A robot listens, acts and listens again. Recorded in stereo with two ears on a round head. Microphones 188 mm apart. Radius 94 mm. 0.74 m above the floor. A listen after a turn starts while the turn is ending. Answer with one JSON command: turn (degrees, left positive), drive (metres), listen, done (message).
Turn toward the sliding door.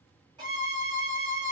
{"listen": true}
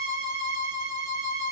{"listen": true}
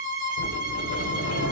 {"turn": 60}
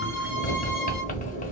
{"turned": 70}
{"turn": 40}
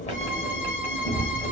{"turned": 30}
{"turn": 10}
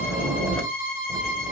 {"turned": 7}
{"done": "Facing the sliding door."}